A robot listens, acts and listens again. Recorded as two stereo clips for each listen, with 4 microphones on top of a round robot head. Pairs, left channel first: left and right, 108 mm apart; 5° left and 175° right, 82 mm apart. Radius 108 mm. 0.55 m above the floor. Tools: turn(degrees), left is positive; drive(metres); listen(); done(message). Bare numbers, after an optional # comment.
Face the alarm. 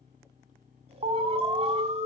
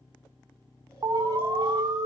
# The alarm: 125° right.
turn(-125)
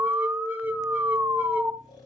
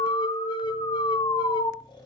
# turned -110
# The alarm is now 15° right.
turn(-15)
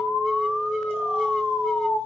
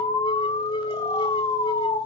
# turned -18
done("Facing the alarm.")